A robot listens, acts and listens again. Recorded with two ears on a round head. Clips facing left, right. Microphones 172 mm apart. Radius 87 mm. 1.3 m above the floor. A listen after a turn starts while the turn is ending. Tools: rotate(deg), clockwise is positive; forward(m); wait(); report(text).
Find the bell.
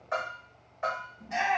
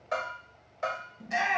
rotate(50)
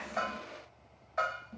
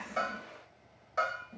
rotate(70)
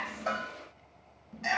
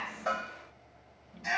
wait()
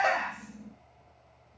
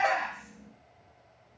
wait()
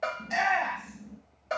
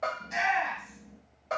rotate(-10)
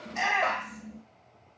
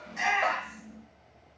wait()
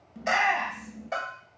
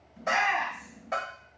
report("Found it: a bell, straight ahead, 1 to 2 m away.")